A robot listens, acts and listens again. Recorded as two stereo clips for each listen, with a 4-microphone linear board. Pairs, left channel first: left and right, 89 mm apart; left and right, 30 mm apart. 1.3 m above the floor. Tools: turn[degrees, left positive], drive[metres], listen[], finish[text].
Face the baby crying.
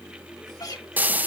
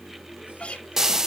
Action: listen[]
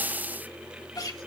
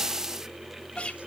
Action: listen[]
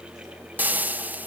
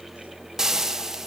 Action: finish[I can't make out a baby crying, only frying and a guitar.]